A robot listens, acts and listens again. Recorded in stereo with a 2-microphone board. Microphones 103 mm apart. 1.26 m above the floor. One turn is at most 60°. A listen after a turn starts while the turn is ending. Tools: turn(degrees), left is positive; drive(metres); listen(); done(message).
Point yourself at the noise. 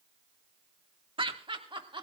turn(degrees=-55)
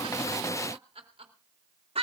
turn(degrees=-60)
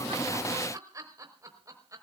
turn(degrees=-35)
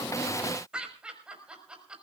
turn(degrees=-10)
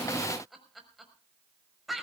done("Facing the laughter, over 4 m away.")